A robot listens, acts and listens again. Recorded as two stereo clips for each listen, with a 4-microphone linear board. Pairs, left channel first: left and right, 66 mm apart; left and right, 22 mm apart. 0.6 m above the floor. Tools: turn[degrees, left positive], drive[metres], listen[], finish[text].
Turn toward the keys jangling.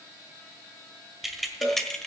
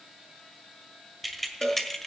Action: turn[30]
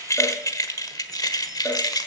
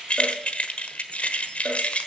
Thought: So it is at 105° left.
Action: turn[105]
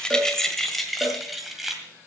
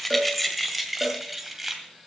Action: finish[Found it: keys jangling, straight ahead.]